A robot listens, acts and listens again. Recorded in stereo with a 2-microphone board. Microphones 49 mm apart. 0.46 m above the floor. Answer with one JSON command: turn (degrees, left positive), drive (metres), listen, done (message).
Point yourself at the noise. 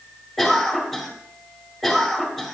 {"turn": 30}
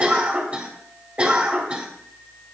{"turn": -30}
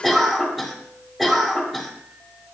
{"done": "Found it: a cough, straight ahead."}